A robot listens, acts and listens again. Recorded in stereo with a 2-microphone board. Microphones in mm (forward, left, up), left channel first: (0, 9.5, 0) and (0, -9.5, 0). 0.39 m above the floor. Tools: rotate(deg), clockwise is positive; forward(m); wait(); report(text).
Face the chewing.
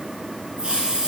wait()
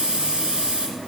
wait()
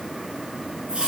report("I can't make out chewing, only a hiss.")